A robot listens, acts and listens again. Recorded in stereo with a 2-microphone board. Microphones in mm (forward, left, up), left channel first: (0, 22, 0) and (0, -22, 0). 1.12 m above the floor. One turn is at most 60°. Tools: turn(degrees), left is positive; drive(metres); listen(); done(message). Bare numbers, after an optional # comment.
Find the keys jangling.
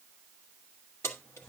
# The keys jangling: about 75° left or 105° left.
turn(60)
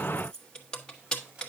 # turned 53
# So it is at 20° left.
turn(20)
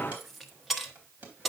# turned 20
done("Found it: keys jangling, straight ahead.")